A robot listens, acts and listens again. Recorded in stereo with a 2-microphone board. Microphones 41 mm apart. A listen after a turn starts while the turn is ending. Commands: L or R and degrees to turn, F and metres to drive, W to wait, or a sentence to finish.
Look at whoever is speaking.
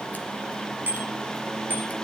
W
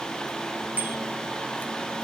W
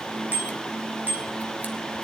I can't make out anyone speaking, only a bicycle bell.